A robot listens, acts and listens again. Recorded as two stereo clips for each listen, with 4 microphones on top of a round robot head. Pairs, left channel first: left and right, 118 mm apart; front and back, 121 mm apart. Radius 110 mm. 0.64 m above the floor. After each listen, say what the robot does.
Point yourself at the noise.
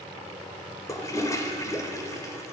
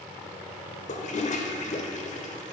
Turn 25° left.
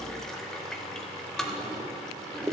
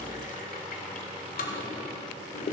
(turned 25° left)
Found it: a toilet flushing, straight ahead.